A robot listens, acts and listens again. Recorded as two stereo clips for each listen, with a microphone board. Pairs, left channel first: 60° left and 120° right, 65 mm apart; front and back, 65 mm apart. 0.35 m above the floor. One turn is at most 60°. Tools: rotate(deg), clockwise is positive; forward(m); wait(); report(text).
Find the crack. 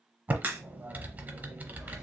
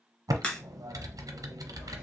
rotate(60)
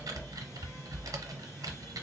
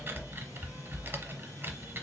rotate(10)
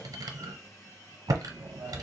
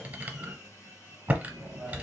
report("I heard a crack from this way, but can't make it out now.")